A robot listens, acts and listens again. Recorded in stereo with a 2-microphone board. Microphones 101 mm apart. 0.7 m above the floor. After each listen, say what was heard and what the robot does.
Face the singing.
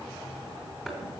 Keep listening.
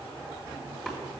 Keep listening.
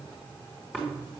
I can't make out singing to turn to.